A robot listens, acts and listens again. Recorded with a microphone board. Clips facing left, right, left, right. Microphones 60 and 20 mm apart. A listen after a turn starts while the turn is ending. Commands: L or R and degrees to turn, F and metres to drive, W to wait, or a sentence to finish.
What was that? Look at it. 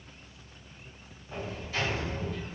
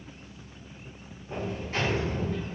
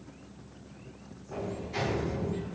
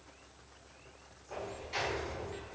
R50
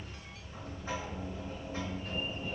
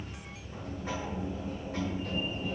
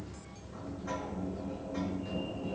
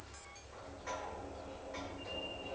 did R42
R85
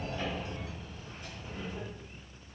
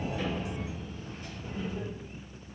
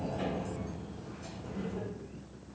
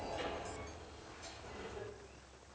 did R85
Facing the sliding door.